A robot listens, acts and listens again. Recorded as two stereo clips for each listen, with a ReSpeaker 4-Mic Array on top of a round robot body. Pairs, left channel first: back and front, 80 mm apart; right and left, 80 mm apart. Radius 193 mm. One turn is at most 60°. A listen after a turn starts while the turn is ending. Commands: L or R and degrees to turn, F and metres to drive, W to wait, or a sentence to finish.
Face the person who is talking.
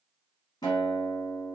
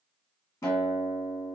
W
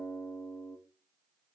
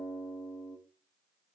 W
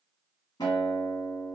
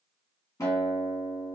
I can't make out anyone speaking, only a guitar.